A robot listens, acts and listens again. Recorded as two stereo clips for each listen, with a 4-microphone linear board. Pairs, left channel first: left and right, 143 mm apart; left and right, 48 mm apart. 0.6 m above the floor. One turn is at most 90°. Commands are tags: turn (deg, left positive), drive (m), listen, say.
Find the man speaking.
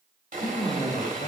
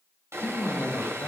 <turn deg="60"/>
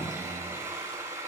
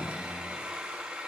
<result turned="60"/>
<turn deg="60"/>
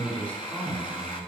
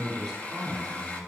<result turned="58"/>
<turn deg="10"/>
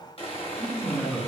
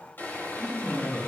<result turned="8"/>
<say>Found it: a man speaking, straight ahead, over 4 m away.</say>